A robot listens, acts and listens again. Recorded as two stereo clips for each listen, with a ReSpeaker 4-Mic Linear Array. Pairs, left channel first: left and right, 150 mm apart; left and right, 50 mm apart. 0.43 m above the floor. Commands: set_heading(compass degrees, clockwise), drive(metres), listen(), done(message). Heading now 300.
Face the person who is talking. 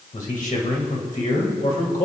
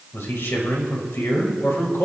set_heading(240)
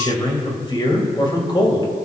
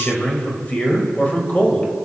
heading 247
set_heading(207)
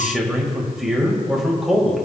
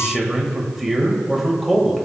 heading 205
done("Found it: a man speaking, straight ahead.")